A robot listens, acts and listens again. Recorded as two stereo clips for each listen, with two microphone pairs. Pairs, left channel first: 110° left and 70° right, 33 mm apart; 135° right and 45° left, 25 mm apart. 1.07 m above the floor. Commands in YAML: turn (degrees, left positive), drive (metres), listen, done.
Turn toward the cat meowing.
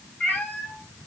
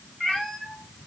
turn: 145
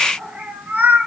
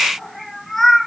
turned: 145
turn: -55
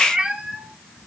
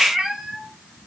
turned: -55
turn: -25
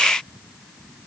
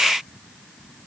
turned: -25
listen: true
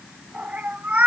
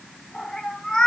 turn: -70
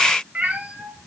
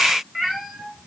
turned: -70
turn: -30
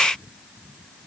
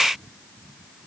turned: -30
listen: true
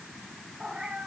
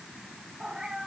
done: "Facing the cat meowing."